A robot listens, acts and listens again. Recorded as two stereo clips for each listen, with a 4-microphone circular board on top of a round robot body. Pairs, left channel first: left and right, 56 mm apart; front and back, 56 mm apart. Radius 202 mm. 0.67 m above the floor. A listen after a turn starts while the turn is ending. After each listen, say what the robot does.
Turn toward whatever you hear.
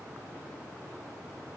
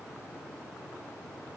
Keep listening.
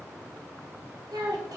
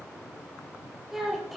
Turn 90° right.
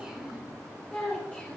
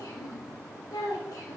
Turn 20° left.
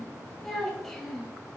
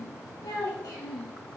Found it: a child speaking, straight ahead, 2 to 4 m away.